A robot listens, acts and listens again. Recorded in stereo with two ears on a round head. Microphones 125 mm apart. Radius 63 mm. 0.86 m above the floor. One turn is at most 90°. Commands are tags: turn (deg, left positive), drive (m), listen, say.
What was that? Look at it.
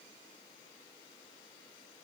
<listen/>
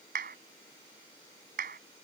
<turn deg="-65"/>
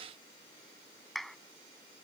<say>Found it: a clap, straight ahead.</say>